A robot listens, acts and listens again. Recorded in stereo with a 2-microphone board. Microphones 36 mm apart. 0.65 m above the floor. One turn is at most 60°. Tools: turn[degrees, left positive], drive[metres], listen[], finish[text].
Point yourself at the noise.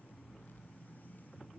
Action: listen[]
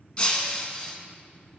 Thought: The breaking glass: about 30° left or 150° left.
Action: turn[30]
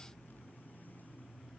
Action: listen[]
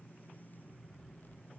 Action: finish[I heard breaking glass, but can't make it out now. It was about straight ahead or 120° left.]